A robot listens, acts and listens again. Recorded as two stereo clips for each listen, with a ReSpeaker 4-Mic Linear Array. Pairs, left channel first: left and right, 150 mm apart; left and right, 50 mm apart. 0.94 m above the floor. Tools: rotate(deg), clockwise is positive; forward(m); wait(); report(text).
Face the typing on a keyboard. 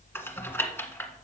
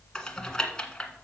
rotate(-30)
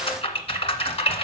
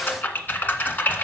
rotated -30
rotate(-135)
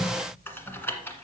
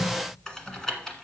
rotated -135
rotate(-15)
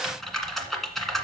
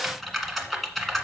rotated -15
report("Facing the typing on a keyboard, 1 to 2 m away.")